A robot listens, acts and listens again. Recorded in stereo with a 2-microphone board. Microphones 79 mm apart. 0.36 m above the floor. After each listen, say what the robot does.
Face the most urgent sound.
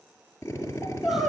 Turn 30° left.
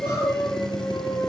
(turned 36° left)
Turn 145° left.
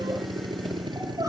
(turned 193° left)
Turn 50° right.
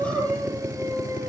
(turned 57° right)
Turn 10° left.
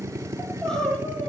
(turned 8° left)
Facing the crying.